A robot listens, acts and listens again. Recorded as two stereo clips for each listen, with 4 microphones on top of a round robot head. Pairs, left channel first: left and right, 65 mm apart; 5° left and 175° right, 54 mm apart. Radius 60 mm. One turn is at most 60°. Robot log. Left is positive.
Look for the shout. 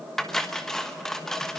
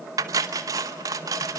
cmd idle
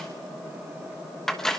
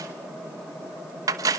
cmd idle
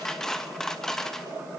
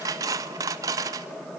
end: I can't make out a shout to turn to.